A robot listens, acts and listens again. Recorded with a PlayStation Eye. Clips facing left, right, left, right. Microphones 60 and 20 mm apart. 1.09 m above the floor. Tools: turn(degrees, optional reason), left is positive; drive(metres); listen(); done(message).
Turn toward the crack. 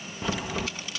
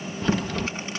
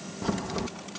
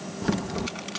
turn(degrees=30)
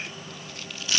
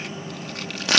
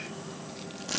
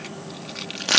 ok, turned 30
listen()
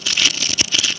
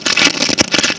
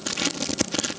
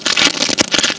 done("I heard a crack, but can't make it out now. It was about 25° right or 145° left.")